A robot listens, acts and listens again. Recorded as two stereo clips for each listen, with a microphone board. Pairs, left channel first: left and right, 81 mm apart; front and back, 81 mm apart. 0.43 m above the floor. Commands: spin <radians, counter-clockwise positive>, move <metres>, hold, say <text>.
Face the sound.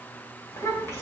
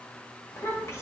spin 0.70
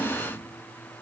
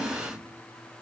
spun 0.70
hold
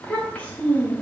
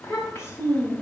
spin 0.61
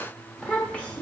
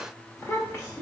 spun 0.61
spin 0.52
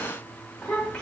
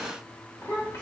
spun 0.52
spin 0.35
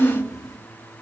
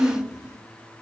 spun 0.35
spin 0.17
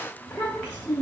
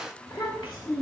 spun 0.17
spin 0.17
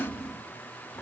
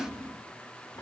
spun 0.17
say Facing the child speaking.